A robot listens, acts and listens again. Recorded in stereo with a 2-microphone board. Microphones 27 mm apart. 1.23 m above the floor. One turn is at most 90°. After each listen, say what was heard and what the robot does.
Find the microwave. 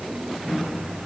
Turn 90° right.
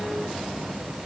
Keep listening.
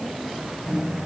The microwave is now 15° right. Turn 15° right.
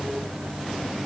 Found it: a microwave, straight ahead.